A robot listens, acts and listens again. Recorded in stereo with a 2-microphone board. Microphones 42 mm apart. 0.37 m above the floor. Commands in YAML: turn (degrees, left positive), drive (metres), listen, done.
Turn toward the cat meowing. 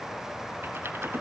listen: true
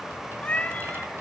turn: 35
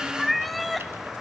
done: "Facing the cat meowing."